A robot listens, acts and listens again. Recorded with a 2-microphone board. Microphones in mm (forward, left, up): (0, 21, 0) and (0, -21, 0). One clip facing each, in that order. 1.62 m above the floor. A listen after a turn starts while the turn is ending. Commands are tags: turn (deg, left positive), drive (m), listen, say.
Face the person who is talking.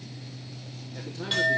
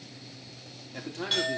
<turn deg="-55"/>
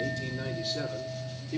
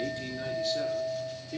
<turn deg="10"/>
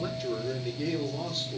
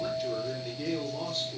<say>Found it: a man speaking, straight ahead, over 4 m away.</say>